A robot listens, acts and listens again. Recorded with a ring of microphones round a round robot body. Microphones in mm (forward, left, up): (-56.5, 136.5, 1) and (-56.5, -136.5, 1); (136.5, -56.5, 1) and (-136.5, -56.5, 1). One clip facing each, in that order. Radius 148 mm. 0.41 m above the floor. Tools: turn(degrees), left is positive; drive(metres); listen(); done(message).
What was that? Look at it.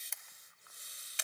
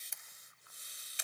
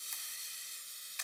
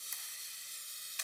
turn(degrees=120)
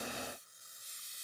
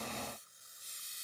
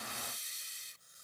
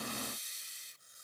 listen()
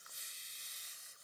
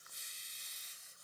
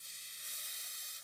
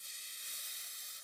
listen()
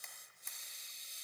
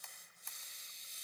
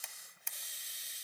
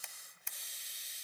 turn(degrees=25)
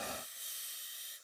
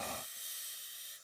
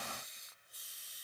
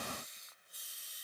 listen()
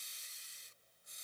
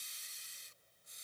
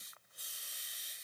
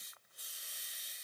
listen()
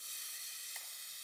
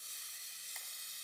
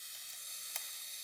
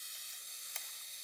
done("Facing where the camera shutter came from. I can't hear it now.")